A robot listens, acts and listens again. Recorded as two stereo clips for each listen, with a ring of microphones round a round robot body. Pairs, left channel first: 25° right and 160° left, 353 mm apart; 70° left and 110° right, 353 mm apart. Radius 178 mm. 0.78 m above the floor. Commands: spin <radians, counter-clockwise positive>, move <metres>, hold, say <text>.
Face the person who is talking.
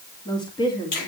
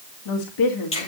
spin 0.96
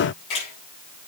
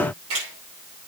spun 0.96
hold
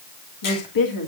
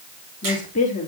say Facing the woman speaking, 2 to 4 m away.